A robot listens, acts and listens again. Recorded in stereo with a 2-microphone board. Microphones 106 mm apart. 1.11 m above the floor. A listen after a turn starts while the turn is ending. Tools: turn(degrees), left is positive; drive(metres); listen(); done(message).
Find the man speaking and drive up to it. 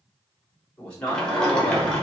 turn(degrees=30)
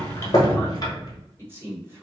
turn(degrees=-20)
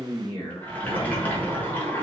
drive(metres=1.0)
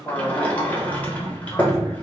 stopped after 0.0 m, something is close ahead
done("Blocked. The man speaking is further on, straight ahead.")